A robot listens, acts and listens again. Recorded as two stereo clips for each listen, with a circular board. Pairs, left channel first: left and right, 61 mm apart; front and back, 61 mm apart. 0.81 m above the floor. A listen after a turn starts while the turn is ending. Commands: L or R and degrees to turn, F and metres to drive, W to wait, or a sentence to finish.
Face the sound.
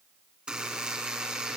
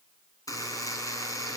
R15
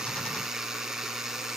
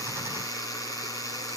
R10
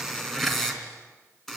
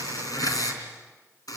Facing the buzzer.